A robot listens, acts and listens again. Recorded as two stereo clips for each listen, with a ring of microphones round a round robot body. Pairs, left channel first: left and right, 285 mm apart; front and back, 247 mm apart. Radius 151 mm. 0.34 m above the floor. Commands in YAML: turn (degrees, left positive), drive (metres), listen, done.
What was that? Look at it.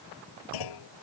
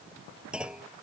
turn: 95
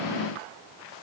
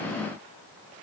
done: "I heard a clunk from this way, but can't make it out now."